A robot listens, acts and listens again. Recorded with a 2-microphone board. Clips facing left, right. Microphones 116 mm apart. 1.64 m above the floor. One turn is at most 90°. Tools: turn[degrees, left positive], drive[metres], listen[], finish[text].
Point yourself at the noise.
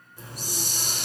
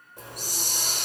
Thought: The hiss: about 55° right or 125° right.
Action: turn[-55]
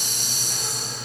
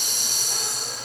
Thought: So it is at 65° right.
Action: turn[-65]
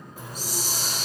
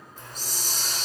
Thought: The hiss is now 10° left.
Action: turn[10]
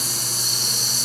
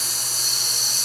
Action: finish[Facing the hiss, 1 to 2 m away.]